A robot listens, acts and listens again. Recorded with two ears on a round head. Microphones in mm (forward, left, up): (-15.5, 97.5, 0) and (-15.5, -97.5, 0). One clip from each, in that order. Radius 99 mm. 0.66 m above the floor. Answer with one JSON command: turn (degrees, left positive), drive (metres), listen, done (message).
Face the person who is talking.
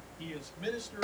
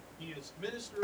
{"turn": 30}
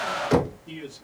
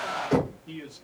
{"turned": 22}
{"turn": 30}
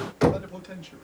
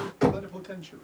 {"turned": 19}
{"turn": 30}
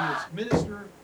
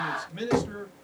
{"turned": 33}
{"turn": -30}
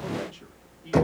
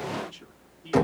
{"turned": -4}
{"listen": true}
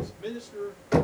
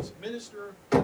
{"turn": -40}
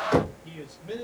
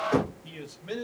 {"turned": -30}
{"turn": -45}
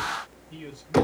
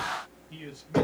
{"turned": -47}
{"turn": -25}
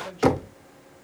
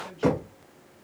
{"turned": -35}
{"turn": 10}
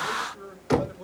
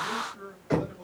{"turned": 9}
{"done": "Found it: a man speaking, straight ahead, 1 to 2 m away."}